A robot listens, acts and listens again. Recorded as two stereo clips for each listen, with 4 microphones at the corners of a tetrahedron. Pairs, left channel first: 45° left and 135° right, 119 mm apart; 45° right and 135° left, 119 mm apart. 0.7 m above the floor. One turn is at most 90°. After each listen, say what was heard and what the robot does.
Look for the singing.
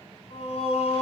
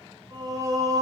The singing: 75° left. Turn 75° left.
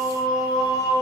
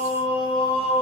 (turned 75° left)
The singing is now 15° right. Turn 15° right.
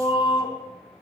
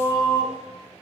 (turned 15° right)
Found it: singing, straight ahead.